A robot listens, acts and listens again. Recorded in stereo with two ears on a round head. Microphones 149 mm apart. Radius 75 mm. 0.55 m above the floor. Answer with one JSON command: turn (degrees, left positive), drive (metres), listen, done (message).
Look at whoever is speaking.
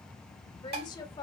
{"turn": 25}
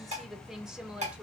{"done": "Facing the woman speaking."}